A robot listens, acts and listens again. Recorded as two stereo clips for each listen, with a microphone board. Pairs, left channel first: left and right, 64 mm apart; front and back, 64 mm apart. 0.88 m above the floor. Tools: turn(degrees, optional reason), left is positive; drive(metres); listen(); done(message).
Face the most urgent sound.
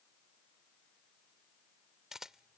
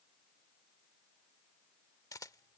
listen()
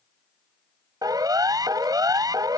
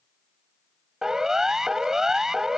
turn(degrees=-100, reason="The siren: 100° right.")
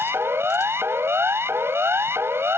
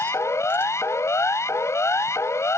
turn(degrees=-40, reason="The siren is now 40° right.")
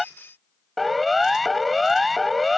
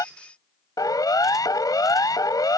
done("Facing the siren.")